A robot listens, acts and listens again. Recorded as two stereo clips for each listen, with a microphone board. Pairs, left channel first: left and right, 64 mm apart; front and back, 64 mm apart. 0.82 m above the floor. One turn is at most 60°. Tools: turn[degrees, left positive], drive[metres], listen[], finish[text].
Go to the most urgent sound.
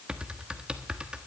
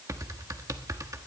Action: listen[]
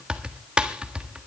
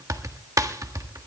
Action: listen[]
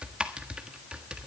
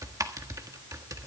Action: finish[I can't make out anything urgent to turn to.]